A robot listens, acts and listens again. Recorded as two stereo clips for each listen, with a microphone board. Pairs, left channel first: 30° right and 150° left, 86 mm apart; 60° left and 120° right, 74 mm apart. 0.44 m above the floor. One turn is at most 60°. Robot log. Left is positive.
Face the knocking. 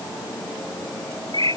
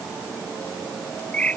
cmd idle
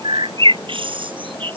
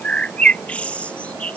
cmd idle
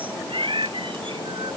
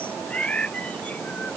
end: I can't make out knocking to turn to.